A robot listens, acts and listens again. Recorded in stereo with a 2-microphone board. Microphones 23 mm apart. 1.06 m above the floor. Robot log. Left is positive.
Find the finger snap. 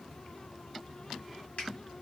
note: The finger snap: about 60° left or 120° left.
cmd yaw +60
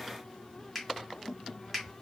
end: Facing the finger snap.